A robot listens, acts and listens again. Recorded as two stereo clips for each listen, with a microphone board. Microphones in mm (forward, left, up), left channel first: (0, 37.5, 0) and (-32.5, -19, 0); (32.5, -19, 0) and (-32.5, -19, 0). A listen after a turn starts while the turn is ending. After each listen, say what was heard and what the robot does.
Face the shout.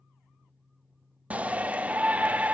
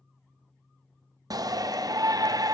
The shout: 170° left. Turn 170° left.
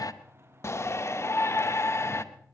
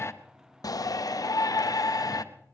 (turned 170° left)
The shout is now 20° left. Turn 20° left.
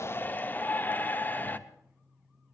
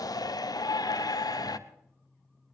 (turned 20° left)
Found it: a shout, straight ahead.